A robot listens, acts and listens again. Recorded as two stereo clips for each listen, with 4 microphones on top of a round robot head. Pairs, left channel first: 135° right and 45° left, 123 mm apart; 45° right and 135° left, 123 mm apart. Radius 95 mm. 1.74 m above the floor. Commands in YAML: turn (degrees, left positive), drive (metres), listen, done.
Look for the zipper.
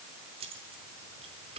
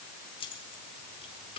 listen: true
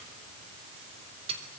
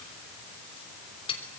listen: true
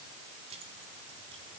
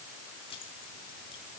done: "I can't make out a zipper to turn to."